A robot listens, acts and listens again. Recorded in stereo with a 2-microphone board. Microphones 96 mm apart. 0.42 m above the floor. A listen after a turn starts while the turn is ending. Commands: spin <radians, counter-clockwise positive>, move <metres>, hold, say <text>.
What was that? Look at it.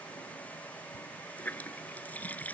spin 0.26
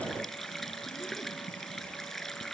say Found it: a running tap, straight ahead.